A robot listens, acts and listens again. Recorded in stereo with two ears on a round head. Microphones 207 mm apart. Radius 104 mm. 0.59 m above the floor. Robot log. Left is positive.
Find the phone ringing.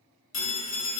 note: The phone ringing: about 60° left or 120° left.
cmd yaw +60
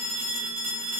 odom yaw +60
end: Facing the phone ringing.